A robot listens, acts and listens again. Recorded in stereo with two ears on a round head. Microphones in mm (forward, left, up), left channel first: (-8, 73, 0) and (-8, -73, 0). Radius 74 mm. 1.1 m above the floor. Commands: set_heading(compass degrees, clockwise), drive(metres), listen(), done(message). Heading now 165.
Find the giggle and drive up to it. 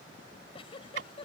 set_heading(130)
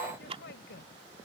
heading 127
set_heading(17)
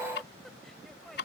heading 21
listen()
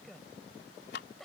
drive(1.0)
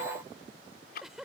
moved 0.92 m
drive(1.0)
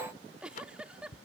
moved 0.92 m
drive(1.0)
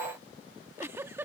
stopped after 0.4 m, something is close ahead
set_heading(36)
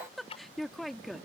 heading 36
done("I am next to the giggle.")